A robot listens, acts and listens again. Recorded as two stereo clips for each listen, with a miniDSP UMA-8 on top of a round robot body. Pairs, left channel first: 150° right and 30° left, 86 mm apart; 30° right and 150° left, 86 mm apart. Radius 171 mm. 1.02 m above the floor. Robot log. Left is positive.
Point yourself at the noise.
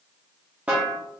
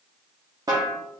note: The snare drum: 105° left.
cmd yaw +105
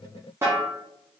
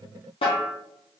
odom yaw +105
note: The snare drum is now 30° right.
cmd yaw -30
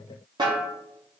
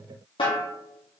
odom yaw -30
end: Found it: a snare drum, straight ahead.